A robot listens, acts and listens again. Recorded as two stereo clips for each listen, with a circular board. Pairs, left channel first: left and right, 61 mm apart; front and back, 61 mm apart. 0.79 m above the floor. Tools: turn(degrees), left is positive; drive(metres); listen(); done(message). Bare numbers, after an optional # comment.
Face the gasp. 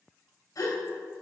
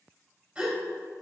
# The gasp: 105° left.
turn(105)
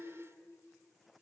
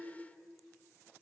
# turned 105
done("I heard a gasp from this way, but can't make it out now.")